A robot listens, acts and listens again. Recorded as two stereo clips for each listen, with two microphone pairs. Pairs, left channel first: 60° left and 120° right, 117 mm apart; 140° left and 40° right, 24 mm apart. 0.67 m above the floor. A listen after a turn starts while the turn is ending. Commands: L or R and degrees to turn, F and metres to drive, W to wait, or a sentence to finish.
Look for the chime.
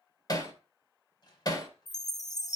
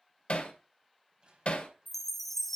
L60
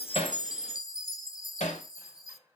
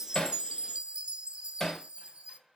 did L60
Facing the chime, under 1 m away.